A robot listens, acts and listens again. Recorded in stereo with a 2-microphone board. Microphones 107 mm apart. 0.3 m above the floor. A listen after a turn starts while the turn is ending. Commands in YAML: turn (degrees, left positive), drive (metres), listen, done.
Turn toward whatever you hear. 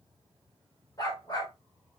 turn: 40
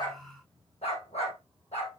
turn: 100
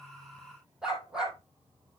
done: "Found it: a dog barking, straight ahead."